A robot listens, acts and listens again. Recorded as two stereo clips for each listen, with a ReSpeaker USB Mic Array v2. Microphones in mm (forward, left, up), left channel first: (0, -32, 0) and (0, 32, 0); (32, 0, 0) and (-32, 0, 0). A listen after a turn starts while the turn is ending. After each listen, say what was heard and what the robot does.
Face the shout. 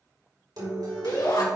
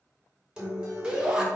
The shout: 105° right. Turn 105° right.
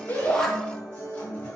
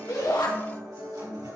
Keep listening.
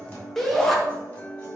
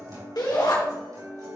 Facing the shout.